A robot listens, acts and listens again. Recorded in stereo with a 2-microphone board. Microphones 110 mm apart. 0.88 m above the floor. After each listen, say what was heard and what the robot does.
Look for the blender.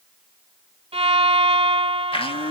The blender: about 55° left or 125° left. Turn 55° left.
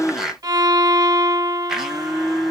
Found it: a blender, straight ahead.